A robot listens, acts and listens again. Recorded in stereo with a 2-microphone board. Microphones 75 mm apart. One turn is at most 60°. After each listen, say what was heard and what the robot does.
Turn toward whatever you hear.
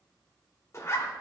The zipper: about 35° left or 145° left. Turn 35° left.
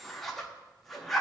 Facing the zipper, under 1 m away.